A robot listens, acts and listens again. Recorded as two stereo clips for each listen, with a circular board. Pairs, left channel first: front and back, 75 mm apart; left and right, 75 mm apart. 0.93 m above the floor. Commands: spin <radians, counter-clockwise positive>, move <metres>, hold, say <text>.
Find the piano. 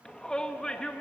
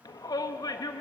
hold
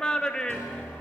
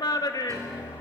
spin -2.27
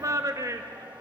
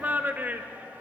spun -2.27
hold
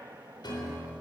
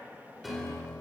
say Found it: a piano, straight ahead, over 4 m away.